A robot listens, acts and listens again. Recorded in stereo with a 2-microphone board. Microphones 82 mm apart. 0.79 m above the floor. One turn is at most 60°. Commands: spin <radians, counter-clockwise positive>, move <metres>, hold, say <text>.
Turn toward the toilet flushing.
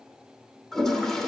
spin 0.52
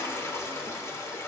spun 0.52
spin 1.05
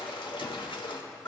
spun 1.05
spin 1.05
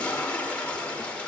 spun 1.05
spin 0.26
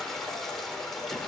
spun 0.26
say Found it: a toilet flushing, straight ahead.